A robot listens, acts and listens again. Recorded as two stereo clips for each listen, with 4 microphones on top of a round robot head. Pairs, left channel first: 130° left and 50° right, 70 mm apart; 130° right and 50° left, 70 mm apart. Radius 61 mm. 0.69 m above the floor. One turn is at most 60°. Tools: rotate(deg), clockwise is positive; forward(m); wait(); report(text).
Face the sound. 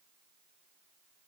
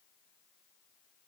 wait()
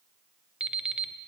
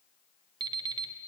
rotate(-25)
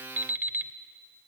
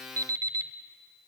rotate(-15)
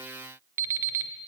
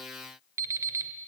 report("Facing the alarm clock.")